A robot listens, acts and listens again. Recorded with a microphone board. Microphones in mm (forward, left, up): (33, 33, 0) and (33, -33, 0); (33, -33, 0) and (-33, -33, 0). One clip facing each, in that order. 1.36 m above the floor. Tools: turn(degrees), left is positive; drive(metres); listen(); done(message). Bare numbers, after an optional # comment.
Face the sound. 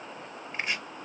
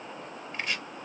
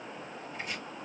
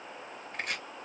# The chopping: 160° left.
turn(160)
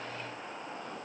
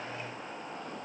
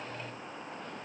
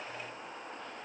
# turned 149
# Nothing new. It was at 10° left.
turn(10)
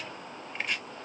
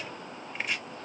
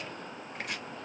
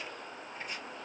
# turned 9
done("Facing the chopping, under 1 m away.")